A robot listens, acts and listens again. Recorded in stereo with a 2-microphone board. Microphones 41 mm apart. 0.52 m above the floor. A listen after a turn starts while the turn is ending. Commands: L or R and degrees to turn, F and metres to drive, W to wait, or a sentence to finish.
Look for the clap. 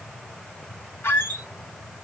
W
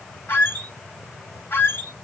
W
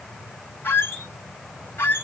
I can't make out a clap to turn to.